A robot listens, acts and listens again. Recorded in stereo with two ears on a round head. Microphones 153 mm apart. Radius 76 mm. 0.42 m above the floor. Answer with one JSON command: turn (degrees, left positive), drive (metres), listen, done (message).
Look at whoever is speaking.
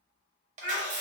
{"turn": -50}
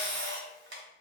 {"listen": true}
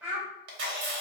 {"turn": -10}
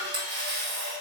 {"listen": true}
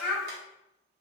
{"done": "Facing the child speaking, 1 to 2 m away."}